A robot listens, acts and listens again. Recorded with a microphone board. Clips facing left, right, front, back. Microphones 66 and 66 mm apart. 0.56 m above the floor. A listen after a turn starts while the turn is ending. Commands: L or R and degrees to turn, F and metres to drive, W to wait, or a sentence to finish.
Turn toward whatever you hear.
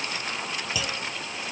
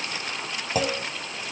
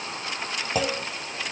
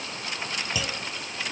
R45
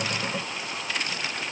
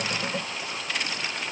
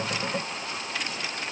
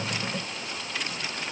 Facing where the clunk came from. I can't hear it now.